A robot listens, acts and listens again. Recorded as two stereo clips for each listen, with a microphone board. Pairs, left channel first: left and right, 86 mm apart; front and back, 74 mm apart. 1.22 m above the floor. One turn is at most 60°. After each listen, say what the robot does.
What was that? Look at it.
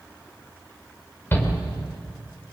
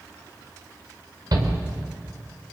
Turn 60° left.
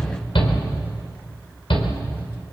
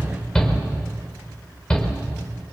Turn 60° left.
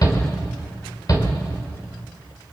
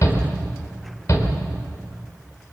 Turn 45° left.
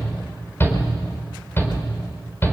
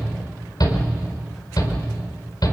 Turn 25° left.
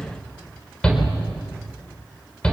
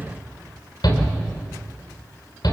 Turn 10° left.
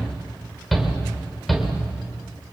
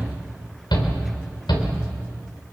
Found it: a shout, straight ahead.